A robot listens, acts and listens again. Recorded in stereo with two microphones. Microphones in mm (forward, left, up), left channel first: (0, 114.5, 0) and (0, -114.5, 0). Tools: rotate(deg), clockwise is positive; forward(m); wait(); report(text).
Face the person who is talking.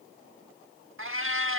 wait()
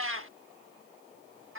wait()
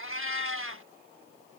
report("I can't make out anyone speaking, only a cat meowing.")